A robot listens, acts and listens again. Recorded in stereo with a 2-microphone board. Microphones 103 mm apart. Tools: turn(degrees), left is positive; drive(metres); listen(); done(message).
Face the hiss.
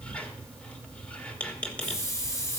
turn(degrees=30)
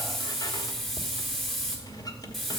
done("Found it: a hiss, straight ahead, 2 to 4 m away.")